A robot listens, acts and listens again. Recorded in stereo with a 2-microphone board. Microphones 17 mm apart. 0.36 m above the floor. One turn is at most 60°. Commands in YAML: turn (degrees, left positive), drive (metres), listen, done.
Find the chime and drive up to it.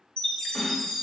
turn: 60
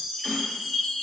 turn: 55
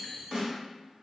turn: 10
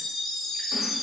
drive: 1.0
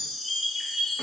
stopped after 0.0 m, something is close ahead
done: "Something is in my way. I am facing the chime but have not reached it."